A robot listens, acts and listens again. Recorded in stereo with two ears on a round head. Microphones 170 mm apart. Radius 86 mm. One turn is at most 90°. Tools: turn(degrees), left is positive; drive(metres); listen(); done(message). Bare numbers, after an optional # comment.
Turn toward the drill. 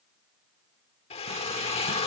# The drill: about 30° left or 150° left.
turn(30)
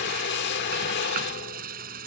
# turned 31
# So it is at 115° left.
turn(90)
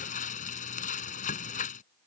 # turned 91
# Nothing new. It was at 25° left.
turn(25)
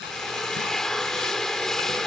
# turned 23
done("Found it: a drill, straight ahead.")